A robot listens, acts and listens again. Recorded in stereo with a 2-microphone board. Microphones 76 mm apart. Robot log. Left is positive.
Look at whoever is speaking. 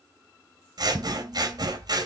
cmd idle
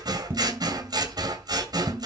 cmd idle
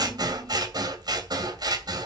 end: I can't make out anyone speaking to turn to.